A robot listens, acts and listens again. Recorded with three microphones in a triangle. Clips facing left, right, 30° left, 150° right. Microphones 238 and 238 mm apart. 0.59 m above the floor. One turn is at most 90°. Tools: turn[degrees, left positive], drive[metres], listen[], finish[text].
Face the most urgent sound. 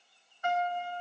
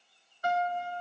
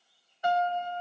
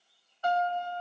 Action: listen[]
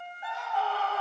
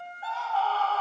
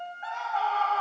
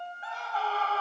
Thought: The scream: 165° left.
Action: turn[90]
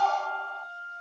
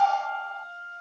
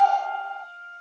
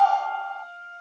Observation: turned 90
Thought: The scream is now 100° left.
Action: turn[90]
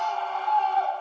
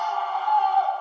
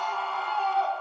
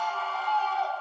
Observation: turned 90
Thought: The scream is now 30° left.
Action: turn[30]
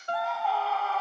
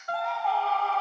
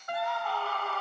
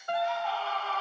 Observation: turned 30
Action: finish[Facing the scream.]